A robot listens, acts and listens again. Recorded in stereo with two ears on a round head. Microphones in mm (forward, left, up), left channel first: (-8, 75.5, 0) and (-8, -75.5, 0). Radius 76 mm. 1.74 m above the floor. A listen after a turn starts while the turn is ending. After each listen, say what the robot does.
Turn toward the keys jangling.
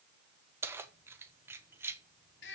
Turn 30° right.
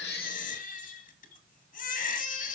Keep listening.
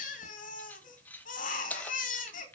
Turn 10° left.
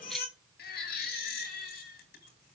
Keep listening.
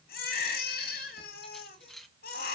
Facing the keys jangling, 1 to 2 m away.